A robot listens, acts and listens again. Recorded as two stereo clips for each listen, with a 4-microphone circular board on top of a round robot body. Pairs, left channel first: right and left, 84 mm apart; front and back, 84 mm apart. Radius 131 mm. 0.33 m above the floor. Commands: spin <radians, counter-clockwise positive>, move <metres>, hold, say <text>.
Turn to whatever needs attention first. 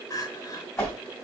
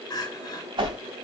spin -0.70
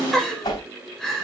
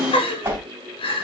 say Facing the crying.